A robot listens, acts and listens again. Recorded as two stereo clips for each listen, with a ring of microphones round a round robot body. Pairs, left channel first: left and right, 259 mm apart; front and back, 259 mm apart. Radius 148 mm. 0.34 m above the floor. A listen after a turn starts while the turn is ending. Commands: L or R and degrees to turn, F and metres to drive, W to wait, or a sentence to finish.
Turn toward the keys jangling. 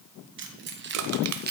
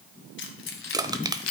R35
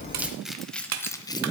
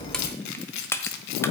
L15
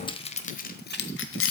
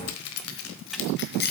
L55
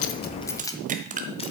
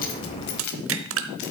L15
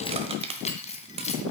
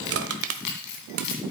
L25
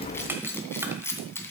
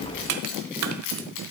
L10
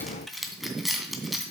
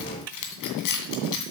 Facing the keys jangling.